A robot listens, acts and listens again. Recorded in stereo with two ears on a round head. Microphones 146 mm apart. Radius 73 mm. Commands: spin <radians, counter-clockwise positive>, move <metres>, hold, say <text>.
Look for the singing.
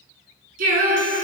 spin -0.96
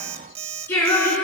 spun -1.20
spin 0.17
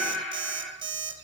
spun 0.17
say Facing the singing, over 4 m away.